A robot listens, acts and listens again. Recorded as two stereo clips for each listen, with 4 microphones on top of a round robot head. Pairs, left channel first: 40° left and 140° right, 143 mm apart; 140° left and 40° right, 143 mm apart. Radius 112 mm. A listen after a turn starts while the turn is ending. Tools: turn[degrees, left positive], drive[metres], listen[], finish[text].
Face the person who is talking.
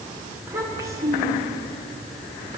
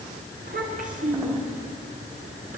Thought: The child speaking: 70° right.
Action: turn[-70]
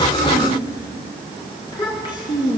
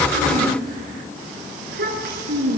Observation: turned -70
Thought: The child speaking is now 25° right.
Action: turn[-25]
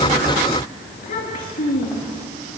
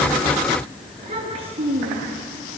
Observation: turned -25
Thought: The child speaking is now 15° left.
Action: turn[15]
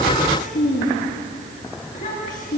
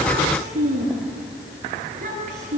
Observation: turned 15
Action: finish[Found it: a child speaking, straight ahead.]